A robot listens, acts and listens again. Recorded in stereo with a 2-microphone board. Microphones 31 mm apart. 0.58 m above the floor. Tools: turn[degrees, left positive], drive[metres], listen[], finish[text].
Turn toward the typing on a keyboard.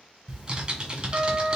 Thought: The typing on a keyboard: about 25° right or 155° right.
Action: turn[-25]
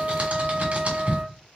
Thought: So it is at 125° right.
Action: turn[-125]
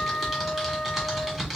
Action: finish[Found it: typing on a keyboard, straight ahead, 1 to 2 m away.]